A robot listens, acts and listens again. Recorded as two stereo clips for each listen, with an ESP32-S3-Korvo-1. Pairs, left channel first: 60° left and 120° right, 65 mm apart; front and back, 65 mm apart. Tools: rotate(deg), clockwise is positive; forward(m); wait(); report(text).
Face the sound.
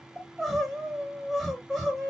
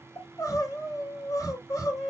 rotate(35)
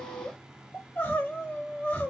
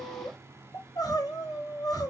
report("Found it: crying, straight ahead.")